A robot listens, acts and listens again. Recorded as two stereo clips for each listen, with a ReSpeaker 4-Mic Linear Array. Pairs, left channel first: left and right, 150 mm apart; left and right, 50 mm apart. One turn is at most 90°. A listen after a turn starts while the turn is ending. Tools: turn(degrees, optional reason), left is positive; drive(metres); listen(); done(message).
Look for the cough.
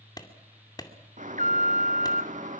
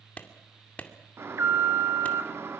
listen()
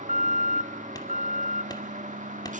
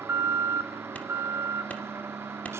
listen()
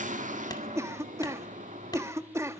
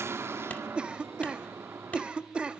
turn(degrees=-20, reason="The cough: about 20° right or 160° right.")
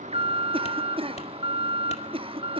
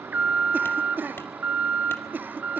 turn(degrees=-90, reason="So it is at 140° right.")
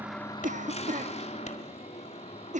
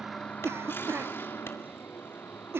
turn(degrees=-55, reason="The cough is now 55° right.")
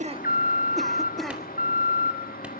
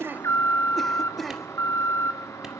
done("Found it: a cough, straight ahead.")